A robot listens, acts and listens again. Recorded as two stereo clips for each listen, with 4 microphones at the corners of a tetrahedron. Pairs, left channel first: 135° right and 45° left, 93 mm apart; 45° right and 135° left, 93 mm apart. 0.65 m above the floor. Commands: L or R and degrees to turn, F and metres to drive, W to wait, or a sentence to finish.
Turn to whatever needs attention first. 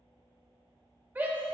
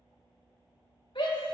R25
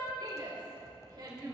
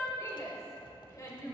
Facing the shout, 2 to 4 m away.